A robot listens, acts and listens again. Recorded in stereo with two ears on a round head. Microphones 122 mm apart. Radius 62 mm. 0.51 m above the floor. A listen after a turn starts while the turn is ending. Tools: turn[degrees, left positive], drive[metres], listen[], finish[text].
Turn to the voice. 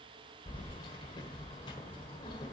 Action: listen[]
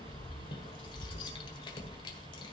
Action: listen[]
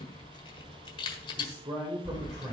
Thought: The man speaking: about 25° right or 155° right.
Action: turn[-25]
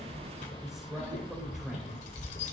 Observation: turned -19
Action: turn[-30]
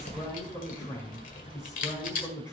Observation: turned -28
Thought: So it is at 20° left.
Action: turn[20]
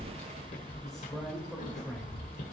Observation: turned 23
Action: listen[]
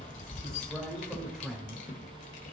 Action: finish[Facing the man speaking, 2 to 4 m away.]